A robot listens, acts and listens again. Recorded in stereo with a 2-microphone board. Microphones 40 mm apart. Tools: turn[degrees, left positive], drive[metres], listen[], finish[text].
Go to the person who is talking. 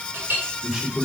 Thought: The man speaking: about 15° right or 165° right.
Action: turn[-15]
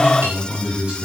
Thought: So it is at 150° right.
Action: turn[-150]
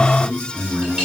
Thought: The man speaking is now 55° right.
Action: turn[-55]
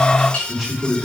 Action: drive[1.0]
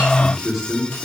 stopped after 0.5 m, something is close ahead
Action: finish[Something is in my way. I am facing the man speaking but have not reached it.]